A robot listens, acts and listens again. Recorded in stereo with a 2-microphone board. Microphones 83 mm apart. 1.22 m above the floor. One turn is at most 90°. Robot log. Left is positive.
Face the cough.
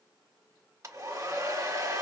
cmd idle
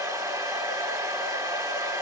cmd idle
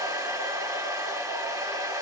end: I can't make out a cough to turn to.